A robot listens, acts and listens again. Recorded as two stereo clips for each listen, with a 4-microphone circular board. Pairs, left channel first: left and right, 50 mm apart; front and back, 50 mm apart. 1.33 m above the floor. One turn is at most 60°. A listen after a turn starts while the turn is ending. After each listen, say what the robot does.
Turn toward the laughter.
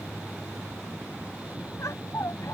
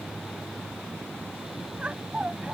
Turn 60° left.
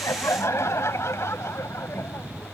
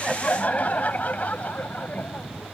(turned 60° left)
Turn 55° left.
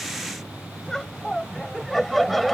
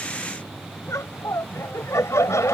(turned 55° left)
Facing the laughter.